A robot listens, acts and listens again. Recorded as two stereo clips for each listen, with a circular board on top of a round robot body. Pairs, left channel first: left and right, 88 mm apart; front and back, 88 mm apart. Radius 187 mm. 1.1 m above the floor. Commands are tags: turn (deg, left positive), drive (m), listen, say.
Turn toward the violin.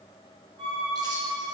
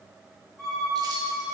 <turn deg="-85"/>
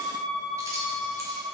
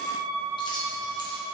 <turn deg="15"/>
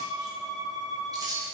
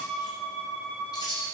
<say>Facing the violin, 1 to 2 m away.</say>